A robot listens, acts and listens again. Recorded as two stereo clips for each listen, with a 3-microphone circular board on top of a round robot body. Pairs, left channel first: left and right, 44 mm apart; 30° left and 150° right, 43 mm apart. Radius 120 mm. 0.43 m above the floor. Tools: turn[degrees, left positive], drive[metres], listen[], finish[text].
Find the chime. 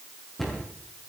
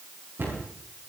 Action: listen[]
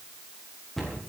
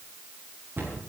Action: listen[]
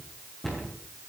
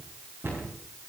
Action: finish[I can't make out a chime to turn to.]